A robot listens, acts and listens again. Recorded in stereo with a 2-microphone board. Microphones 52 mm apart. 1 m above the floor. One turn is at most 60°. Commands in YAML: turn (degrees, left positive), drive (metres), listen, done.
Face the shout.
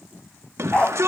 turn: -60
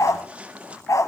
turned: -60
turn: -30
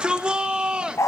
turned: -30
turn: -25
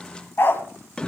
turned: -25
turn: 15
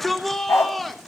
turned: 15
done: "Found it: a shout, straight ahead."